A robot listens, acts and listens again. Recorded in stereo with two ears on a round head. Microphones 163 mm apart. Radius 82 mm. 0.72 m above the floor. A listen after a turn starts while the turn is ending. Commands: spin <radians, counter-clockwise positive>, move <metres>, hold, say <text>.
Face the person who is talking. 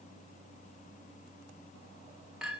hold
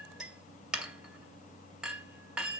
hold
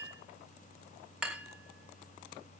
say I can't make out anyone speaking to turn to.